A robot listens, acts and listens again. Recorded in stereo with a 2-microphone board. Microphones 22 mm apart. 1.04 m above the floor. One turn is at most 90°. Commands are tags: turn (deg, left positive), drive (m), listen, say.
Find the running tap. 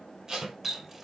<turn deg="-30"/>
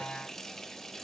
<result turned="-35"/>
<turn deg="25"/>
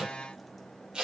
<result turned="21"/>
<listen/>
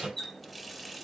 <say>Found it: a running tap, straight ahead, 1 to 2 m away.</say>